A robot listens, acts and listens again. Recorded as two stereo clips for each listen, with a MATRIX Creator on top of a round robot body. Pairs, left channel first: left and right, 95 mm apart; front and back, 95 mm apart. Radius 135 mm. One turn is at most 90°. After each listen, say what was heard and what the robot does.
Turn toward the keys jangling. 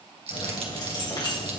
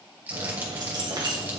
The keys jangling: 140° left. Turn 90° left.
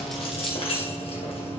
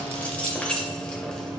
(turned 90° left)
The keys jangling is now 85° left. Turn 85° left.
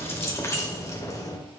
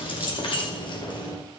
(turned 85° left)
The keys jangling is now 35° left. Turn 35° left.
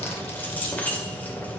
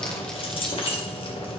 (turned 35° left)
The keys jangling is now 20° left. Turn 20° left.
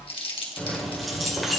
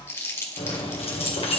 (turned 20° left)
Found it: keys jangling, straight ahead, 1 to 2 m away.